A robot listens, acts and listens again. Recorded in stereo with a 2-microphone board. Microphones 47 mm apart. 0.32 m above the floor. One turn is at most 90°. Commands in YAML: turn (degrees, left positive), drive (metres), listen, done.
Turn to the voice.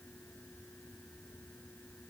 listen: true
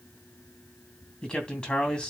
turn: 20
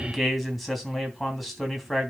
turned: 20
done: "Found it: a man speaking, straight ahead."